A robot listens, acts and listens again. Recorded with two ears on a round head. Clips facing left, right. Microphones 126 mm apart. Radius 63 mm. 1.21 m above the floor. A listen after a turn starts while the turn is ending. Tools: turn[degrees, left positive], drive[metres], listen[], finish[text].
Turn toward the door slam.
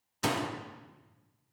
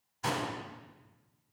Action: turn[90]
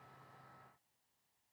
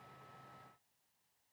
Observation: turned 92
Action: finish[I heard a door slam from this way, but can't make it out now.]